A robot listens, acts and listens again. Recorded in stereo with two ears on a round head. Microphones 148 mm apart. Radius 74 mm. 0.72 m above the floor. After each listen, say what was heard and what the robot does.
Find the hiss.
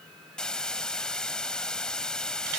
Turn 30° left.
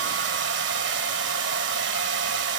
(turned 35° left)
Keep listening.
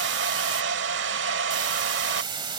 So it is at 30° right. Turn 30° right.
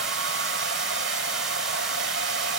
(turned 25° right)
Keep listening.
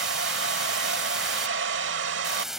Found it: a hiss, straight ahead.